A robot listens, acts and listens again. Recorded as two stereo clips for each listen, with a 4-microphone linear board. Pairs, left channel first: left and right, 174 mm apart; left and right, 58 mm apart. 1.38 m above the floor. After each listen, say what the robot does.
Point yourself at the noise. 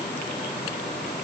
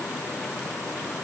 Keep listening.
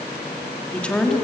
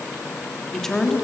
Turn 30° left.
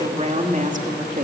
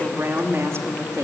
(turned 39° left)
Turn 50° right.
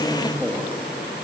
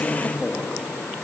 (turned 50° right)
Turn 15° right.
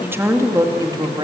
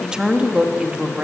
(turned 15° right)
Turn 25° right.
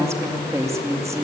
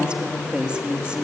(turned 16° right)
Turn 15° right.
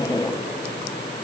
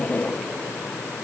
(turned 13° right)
Keep listening.
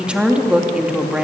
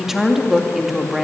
Found it: a woman speaking, straight ahead.